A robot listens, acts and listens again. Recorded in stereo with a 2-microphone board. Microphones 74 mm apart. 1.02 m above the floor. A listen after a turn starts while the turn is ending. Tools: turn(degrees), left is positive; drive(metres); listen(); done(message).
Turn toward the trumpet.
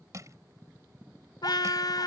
turn(degrees=90)
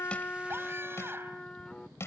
turn(degrees=10)
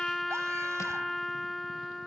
done("Facing the trumpet.")